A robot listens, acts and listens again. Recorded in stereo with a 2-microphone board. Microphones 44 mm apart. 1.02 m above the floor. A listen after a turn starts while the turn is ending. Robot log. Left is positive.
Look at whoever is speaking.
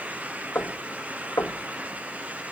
cmd idle
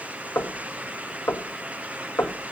cmd idle
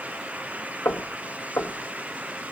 end: I can't make out anyone speaking to turn to.